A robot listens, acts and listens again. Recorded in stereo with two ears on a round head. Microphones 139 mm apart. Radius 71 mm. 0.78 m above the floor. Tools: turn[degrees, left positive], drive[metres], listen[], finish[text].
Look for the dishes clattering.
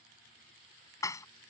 Thought: The dishes clattering: about 25° left or 155° left.
Action: turn[25]
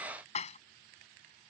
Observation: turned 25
Thought: So it is at 135° left.
Action: turn[135]
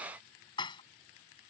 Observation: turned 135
Thought: The dishes clattering is now 30° left.
Action: turn[30]
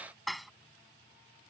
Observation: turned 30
Action: finish[Found it: dishes clattering, straight ahead.]